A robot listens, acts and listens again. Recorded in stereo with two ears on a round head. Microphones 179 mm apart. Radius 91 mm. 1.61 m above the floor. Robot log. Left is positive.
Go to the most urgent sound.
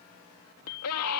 cmd yaw +90
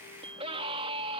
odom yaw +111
note: So it is at 25° right.
cmd yaw -25
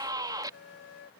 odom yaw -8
note: The scream is now 20° right.
cmd yaw -20
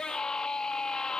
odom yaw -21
cmd fwd 1.0
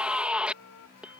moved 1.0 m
cmd fwd 1.0
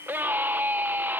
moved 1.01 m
note: The scream is now 10° right.
cmd yaw -10
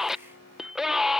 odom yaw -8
cmd fwd 1.0
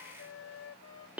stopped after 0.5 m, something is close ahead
end: I am next to the scream.